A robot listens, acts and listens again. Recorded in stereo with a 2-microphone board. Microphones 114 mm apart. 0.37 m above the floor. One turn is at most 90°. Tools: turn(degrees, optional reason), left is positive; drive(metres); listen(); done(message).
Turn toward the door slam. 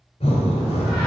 turn(degrees=30)
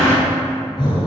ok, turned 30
turn(degrees=-25, reason="So it is at 25° right.")
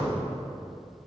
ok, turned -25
done("I heard a door slam from this way, but can't make it out now.")